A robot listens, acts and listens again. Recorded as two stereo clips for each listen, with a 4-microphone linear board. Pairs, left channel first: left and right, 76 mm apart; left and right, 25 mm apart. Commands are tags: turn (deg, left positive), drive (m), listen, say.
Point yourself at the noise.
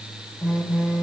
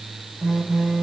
<turn deg="-30"/>
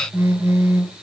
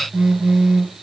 <turn deg="-140"/>
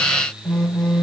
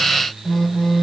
<turn deg="10"/>
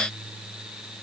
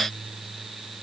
<listen/>
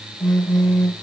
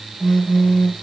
<say>Facing the phone buzzing, 2 to 4 m away.</say>